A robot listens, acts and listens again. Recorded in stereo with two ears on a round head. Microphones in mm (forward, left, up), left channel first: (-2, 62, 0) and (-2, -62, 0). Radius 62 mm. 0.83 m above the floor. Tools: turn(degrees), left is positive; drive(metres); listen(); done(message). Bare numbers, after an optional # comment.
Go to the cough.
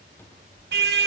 listen()
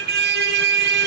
listen()
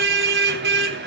done("I can't make out a cough, only a car horn and a cupboard door.")